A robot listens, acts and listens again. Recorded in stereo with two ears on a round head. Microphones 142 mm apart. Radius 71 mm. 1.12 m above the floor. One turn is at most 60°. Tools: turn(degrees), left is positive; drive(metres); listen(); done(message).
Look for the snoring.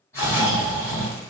turn(degrees=20)
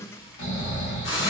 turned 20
turn(degrees=60)
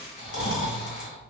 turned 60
turn(degrees=60)
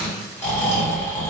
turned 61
turn(degrees=20)
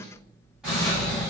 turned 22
done("Found it: snoring, straight ahead.")